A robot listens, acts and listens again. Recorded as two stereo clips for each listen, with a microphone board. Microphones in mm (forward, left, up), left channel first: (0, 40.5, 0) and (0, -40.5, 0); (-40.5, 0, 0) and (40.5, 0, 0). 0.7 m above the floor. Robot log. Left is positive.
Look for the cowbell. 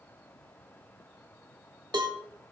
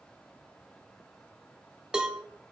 note: The cowbell: 80° right.
cmd yaw -80
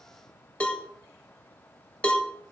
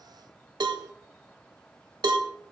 note: The cowbell is now 15° left.
cmd yaw +15
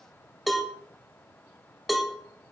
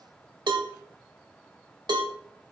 end: Found it: a cowbell, straight ahead.